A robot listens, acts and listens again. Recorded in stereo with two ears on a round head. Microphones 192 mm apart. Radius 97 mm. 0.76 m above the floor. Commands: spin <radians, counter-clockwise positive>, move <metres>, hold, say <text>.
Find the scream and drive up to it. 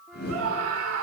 spin -1.22
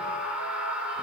move 1.0
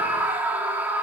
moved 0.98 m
spin -0.17
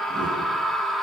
move 1.0
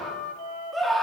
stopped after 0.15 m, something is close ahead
say Arrived at the scream, straight ahead.